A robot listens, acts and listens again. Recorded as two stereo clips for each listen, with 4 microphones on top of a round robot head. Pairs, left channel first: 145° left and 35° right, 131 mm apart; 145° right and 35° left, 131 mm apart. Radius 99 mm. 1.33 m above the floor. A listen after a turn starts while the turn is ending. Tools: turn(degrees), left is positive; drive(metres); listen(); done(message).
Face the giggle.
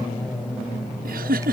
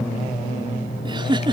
turn(degrees=-20)
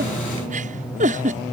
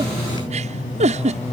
done("Facing the giggle.")